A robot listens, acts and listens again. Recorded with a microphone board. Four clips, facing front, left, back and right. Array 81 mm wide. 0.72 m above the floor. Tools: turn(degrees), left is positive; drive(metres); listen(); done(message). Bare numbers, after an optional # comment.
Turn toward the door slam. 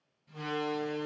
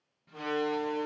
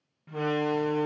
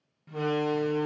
# The door slam: 165° right.
turn(-165)
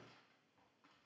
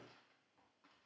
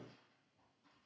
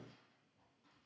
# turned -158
done("Facing where the door slam came from. I can't hear it now.")